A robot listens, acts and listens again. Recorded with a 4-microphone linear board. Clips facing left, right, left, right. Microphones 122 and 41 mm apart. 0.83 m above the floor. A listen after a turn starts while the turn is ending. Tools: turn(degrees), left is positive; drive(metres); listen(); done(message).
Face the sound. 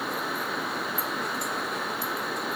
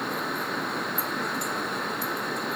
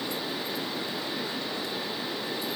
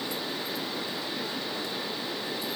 listen()
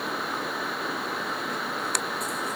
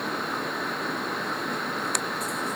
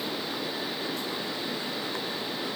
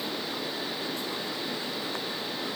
listen()
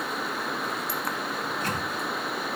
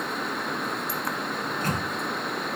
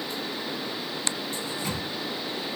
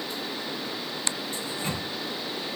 turn(degrees=-45)
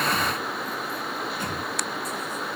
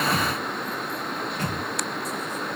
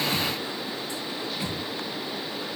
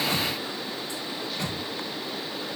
turn(degrees=-90)
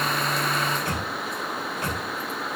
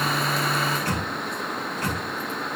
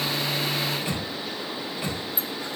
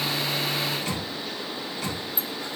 turn(degrees=20)
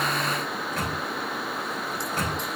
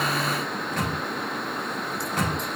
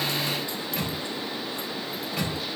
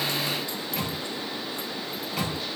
done("Facing the microwave.")